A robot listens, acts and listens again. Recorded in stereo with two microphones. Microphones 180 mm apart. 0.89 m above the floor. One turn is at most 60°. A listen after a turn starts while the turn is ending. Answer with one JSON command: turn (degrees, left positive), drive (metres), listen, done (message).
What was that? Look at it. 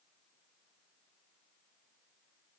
{"listen": true}
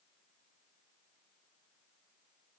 {"listen": true}
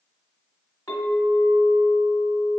{"turn": 20}
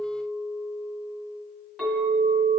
{"done": "Found it: a clink, straight ahead."}